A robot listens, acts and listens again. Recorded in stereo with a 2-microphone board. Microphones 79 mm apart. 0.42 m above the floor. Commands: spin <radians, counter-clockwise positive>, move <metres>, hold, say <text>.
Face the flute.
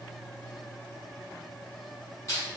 hold
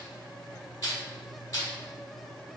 hold
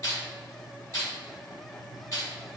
say I can't make out a flute, only crushing.